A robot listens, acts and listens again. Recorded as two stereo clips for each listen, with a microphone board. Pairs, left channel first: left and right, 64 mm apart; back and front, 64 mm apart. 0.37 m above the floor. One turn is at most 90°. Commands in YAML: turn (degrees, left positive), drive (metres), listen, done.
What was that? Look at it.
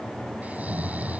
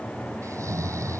turn: -25
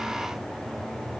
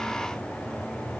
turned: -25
listen: true
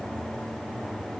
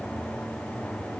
listen: true
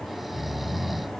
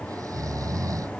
done: "Found it: snoring, straight ahead."